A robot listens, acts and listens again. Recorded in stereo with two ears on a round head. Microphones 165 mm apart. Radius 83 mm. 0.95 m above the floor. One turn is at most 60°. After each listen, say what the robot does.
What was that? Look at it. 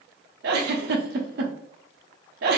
Turn 55° right.
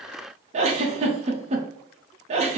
Turn 40° right.
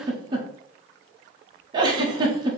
Turn 25° right.
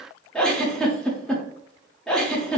Found it: a giggle, straight ahead, under 1 m away.